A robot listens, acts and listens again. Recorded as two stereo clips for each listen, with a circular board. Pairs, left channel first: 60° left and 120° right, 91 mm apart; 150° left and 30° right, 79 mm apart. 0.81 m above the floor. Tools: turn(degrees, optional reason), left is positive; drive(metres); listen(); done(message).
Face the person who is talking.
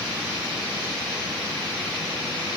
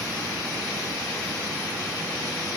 listen()
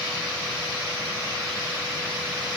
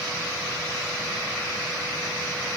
listen()
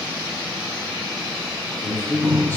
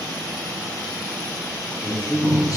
turn(degrees=125, reason="The man speaking: 125° left.")
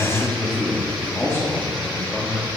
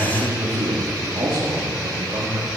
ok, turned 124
done("Found it: a man speaking, straight ahead.")